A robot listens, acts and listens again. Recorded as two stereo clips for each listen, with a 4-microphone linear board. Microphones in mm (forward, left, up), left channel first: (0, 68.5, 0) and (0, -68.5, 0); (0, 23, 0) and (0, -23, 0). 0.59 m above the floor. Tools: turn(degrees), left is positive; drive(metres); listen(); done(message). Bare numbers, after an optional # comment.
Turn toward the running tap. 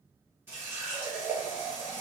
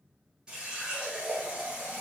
# The running tap: about 15° right or 165° right.
turn(-15)
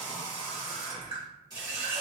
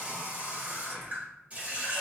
# So it is at 150° right.
turn(-150)
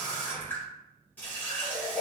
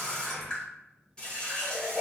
# The running tap is now 15° left.
turn(15)
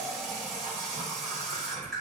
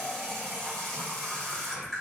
done("Found it: a running tap, straight ahead.")